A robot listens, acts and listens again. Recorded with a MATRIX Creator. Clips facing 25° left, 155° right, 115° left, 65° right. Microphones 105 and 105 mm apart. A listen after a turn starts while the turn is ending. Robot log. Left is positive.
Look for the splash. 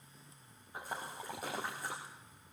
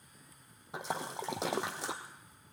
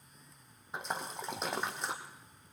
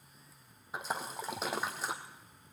note: The splash: 155° right.
cmd yaw -155
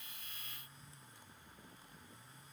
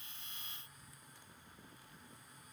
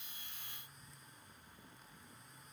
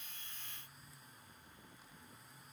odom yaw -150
end: Facing where the splash came from. I can't hear it now.